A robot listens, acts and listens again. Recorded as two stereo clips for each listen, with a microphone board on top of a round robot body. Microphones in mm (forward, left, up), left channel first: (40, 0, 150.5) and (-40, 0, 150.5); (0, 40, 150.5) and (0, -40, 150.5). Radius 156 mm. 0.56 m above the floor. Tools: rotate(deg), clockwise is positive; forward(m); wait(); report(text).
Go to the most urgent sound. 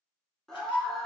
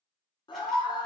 rotate(-85)
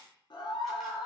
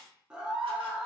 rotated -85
rotate(10)
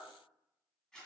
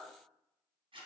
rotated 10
wait()
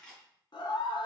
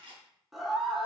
forward(1.0)
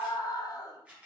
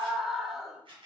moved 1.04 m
forward(1.0)
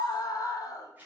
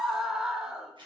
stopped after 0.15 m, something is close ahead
rotate(10)
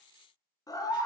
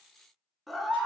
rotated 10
report("I am next to the scream.")